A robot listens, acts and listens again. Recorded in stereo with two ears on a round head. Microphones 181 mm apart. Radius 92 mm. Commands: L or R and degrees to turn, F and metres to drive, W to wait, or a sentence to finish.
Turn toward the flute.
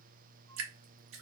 W
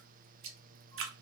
W
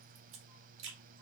I can't make out a flute, only dripping.